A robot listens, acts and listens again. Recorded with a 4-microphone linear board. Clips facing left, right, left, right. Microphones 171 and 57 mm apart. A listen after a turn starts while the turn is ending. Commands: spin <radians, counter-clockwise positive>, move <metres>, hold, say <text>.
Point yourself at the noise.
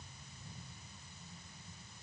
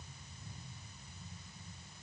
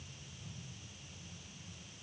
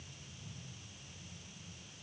hold
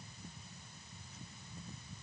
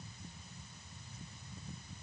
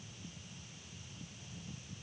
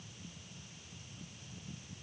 hold
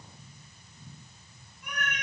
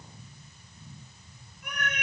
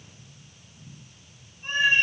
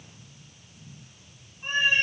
spin -1.13
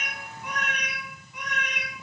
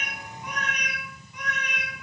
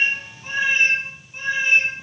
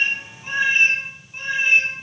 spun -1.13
spin -0.26
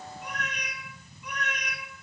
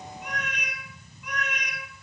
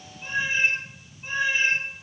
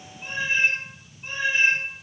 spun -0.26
say Facing the cat meowing.